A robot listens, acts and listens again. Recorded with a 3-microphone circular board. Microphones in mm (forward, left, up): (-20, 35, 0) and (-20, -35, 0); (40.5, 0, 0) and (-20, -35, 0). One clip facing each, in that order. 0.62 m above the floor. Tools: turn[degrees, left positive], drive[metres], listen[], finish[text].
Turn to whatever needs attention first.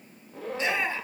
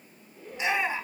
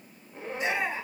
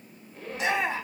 Thought: The shout: 165° right.
Action: turn[-165]
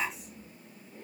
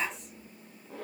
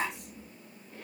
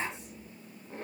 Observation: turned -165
Action: finish[Found it: a shout, straight ahead, over 4 m away.]